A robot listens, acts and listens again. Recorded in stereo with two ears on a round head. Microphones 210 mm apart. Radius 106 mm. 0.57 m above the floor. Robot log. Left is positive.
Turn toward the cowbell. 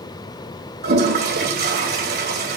cmd idle
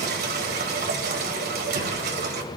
cmd idle
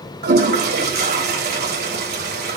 end: I can't make out a cowbell to turn to.